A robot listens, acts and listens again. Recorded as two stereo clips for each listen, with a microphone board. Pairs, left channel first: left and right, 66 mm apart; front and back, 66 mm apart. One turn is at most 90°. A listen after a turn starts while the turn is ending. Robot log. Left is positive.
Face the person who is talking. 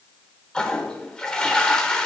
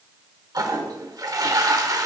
cmd idle
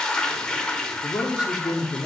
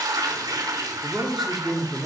note: The man speaking: 85° left.
cmd yaw +85
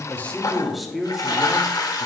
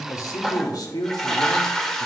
end: Found it: a man speaking, straight ahead, 1 to 2 m away.